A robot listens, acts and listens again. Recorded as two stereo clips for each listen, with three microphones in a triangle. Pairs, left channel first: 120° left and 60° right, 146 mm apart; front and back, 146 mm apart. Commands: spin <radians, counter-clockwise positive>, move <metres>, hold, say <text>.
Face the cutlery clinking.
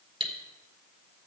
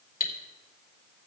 spin -0.17
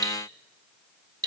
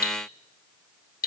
say Facing the cutlery clinking, 1 to 2 m away.